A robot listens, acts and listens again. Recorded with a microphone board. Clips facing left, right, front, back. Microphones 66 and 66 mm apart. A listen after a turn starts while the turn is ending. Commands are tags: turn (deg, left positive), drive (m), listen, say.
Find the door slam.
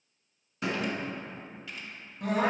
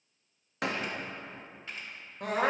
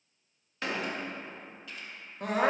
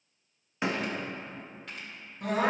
<turn deg="-110"/>
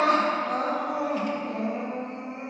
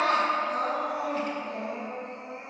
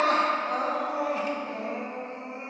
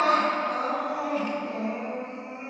<say>Facing where the door slam came from. I can't hear it now.</say>